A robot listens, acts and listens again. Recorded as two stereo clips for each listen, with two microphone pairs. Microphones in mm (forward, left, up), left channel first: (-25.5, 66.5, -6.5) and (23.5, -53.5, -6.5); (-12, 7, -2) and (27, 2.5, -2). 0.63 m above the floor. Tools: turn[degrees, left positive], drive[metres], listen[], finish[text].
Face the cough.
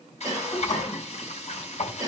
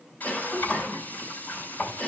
Thought: The cough: 130° right.
Action: turn[-130]
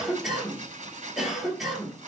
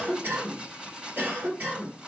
Thought: The cough is now 20° left.
Action: turn[20]
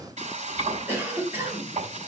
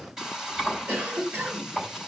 Action: finish[Found it: a cough, straight ahead.]